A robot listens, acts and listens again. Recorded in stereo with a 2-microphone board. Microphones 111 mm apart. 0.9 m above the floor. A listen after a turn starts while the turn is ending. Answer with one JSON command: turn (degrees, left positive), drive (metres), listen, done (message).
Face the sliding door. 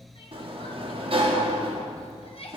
{"turn": -55}
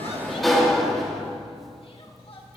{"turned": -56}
{"done": "Found it: a sliding door, straight ahead, 1 to 2 m away."}